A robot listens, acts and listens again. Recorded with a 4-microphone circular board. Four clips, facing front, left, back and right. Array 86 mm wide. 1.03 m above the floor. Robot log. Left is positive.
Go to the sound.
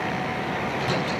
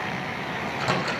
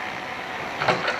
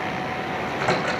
note: The microwave: 155° right.
cmd yaw -155
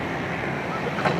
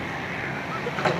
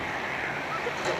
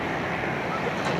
note: The microwave is now 50° left.
cmd yaw +50
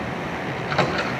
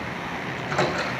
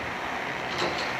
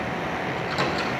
note: The microwave is now 20° left.
cmd yaw +20
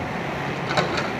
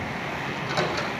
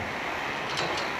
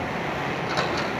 cmd fwd 1.0
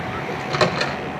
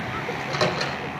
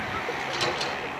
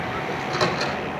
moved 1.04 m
cmd fwd 1.0
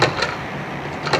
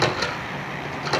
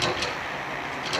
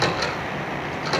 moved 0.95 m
cmd fwd 1.0
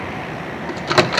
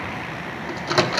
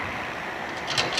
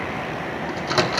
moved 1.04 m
cmd fwd 1.0
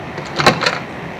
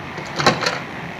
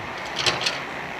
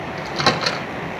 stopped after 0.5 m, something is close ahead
end: Arrived at the microwave, straight ahead.